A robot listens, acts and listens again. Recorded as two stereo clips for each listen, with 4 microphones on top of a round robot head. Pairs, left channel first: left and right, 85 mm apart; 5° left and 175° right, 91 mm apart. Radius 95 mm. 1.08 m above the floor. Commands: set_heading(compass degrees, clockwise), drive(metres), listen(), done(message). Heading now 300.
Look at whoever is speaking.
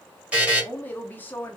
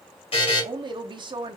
set_heading(140)
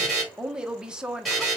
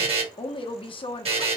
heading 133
set_heading(143)
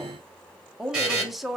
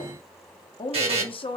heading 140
done("Facing the woman speaking, under 1 m away.")